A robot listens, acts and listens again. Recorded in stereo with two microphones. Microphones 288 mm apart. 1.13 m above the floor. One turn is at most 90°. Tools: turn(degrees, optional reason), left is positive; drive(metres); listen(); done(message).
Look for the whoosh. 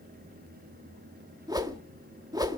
turn(degrees=-30)
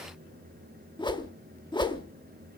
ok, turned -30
turn(degrees=15, reason="So it is at 15° left.")
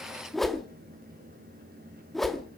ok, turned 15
done("Found it: a whoosh, straight ahead.")